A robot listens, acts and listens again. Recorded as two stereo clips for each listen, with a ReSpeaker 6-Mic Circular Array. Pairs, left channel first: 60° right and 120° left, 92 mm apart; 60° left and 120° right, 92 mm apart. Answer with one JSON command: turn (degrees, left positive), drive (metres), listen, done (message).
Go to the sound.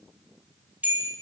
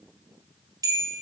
{"turn": -170}
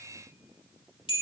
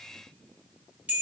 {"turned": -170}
{"turn": -50}
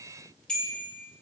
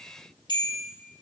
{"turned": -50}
{"turn": 20}
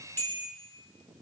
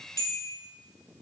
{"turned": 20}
{"drive": 1.0}
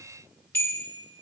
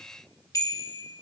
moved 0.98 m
{"drive": 1.0}
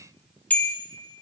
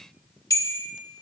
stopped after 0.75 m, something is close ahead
{"turn": 10}
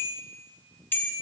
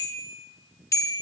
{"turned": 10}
{"done": "Arrived at the bell, straight ahead."}